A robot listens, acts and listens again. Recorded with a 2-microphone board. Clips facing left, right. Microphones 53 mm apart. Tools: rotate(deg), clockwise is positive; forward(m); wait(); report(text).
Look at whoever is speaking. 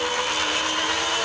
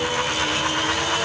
wait()
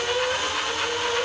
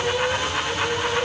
wait()
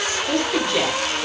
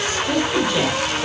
rotate(30)
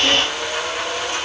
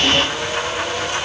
wait()
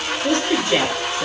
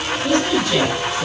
rotate(-20)
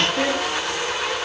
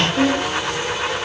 report("Facing the woman speaking.")